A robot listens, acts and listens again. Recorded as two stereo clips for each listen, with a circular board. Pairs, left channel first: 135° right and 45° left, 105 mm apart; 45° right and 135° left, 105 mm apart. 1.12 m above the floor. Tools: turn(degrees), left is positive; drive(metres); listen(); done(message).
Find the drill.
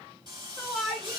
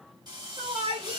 turn(degrees=90)
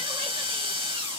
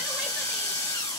turn(degrees=10)
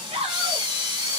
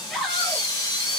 done("Found it: a drill, straight ahead, 2 to 4 m away.")